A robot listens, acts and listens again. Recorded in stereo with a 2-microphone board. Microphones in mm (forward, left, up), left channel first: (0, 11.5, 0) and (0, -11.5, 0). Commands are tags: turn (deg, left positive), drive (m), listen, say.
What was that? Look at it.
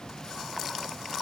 <listen/>
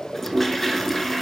<turn deg="30"/>
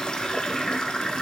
<turn deg="135"/>
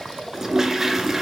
<turn deg="-25"/>
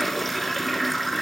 <say>Facing the toilet flushing.</say>